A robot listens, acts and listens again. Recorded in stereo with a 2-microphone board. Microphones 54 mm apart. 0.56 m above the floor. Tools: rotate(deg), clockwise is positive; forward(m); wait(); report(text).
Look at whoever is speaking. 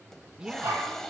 rotate(30)
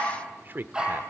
rotate(130)
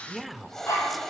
report("Facing the man speaking, 1 to 2 m away.")